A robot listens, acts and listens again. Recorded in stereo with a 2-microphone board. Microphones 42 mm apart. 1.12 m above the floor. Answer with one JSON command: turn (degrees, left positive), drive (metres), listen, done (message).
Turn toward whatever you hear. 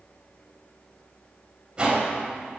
{"turn": -20}
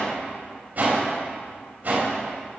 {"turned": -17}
{"turn": -140}
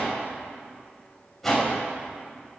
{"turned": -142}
{"done": "Facing the whoosh."}